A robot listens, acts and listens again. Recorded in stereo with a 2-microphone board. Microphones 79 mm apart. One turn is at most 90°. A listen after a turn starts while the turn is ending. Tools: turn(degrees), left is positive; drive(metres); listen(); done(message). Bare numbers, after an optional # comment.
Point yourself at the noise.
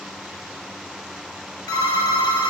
# The phone ringing: about 65° left or 115° left.
turn(65)
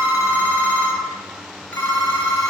# So it is at 30° left.
turn(30)
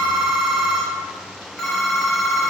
done("Facing the phone ringing, 1 to 2 m away.")